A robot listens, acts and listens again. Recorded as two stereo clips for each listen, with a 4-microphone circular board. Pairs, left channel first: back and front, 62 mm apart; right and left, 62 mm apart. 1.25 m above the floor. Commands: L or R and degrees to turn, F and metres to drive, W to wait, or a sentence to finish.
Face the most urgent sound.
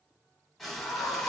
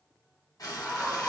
R175
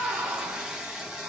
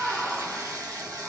Facing the scream.